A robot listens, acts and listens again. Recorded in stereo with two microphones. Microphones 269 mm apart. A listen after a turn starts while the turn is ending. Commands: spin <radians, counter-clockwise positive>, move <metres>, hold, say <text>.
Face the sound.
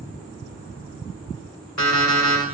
spin 1.57
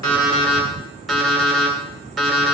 say Facing the alarm clock.